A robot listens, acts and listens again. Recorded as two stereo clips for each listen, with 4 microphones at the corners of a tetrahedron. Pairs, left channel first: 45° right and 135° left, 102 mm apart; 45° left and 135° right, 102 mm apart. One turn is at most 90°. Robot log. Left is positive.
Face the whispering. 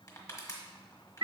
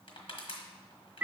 cmd idle
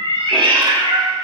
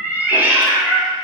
cmd idle
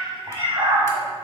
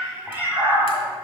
end: I can't make out whispering to turn to.